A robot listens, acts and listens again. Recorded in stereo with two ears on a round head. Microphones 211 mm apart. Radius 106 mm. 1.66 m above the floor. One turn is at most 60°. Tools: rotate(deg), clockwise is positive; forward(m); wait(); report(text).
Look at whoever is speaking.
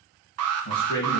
rotate(-60)
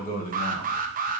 rotate(-35)
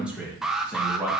report("Found it: a man speaking, straight ahead.")